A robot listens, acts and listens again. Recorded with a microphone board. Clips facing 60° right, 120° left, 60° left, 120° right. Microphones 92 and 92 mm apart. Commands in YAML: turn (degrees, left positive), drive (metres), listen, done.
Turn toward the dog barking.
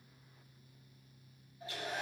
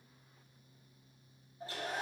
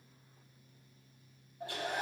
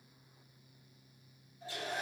listen: true
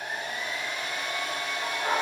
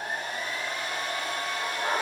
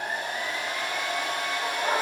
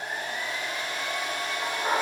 turn: -155
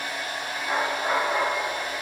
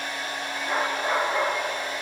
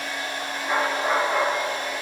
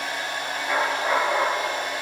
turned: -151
done: "Found it: a dog barking, straight ahead, 2 to 4 m away."